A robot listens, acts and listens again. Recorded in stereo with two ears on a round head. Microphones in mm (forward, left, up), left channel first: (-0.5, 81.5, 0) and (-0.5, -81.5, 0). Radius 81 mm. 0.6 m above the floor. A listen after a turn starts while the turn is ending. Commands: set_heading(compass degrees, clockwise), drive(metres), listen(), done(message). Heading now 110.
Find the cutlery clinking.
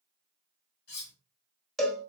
set_heading(50)
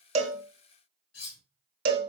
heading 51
set_heading(351)
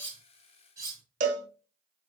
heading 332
set_heading(352)
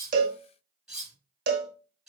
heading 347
done("Found it: cutlery clinking, straight ahead.")